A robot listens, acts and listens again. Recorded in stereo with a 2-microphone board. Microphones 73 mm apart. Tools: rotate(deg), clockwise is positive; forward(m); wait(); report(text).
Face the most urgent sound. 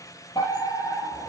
rotate(-65)
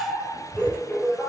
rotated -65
rotate(-15)
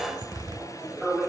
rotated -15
report("Found it: a fire alarm, straight ahead, over 4 m away.")